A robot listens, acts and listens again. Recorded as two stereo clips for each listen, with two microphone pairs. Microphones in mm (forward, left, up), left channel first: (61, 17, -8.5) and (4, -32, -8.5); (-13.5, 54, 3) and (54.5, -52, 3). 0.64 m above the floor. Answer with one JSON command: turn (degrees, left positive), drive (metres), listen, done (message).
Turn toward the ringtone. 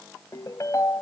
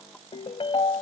{"turn": 80}
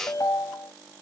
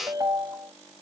{"done": "Facing the ringtone."}